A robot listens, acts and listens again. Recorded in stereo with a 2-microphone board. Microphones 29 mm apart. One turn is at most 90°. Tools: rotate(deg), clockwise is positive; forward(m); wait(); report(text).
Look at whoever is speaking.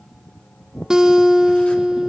wait()
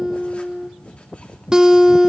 wait()
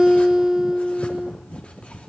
report("I can't make out anyone speaking, only a guitar.")